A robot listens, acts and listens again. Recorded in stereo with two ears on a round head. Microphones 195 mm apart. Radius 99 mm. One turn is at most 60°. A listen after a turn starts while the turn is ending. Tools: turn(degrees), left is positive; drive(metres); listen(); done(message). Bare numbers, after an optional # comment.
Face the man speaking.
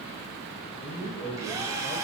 # The man speaking: about 25° left or 155° left.
turn(25)
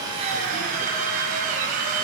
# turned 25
listen()
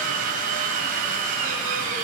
listen()
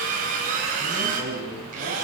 # So it is at 10° right.
turn(-10)
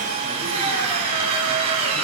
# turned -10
listen()
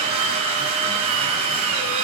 listen()
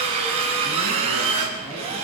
done("Facing where the man speaking came from. I can't hear it now.")